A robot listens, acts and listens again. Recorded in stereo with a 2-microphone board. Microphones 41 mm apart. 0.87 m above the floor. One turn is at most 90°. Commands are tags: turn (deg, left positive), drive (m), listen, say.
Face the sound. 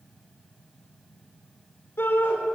<turn deg="70"/>
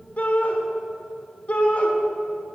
<turn deg="40"/>
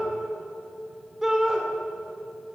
<turn deg="-15"/>
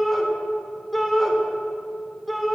<say>Facing the shout.</say>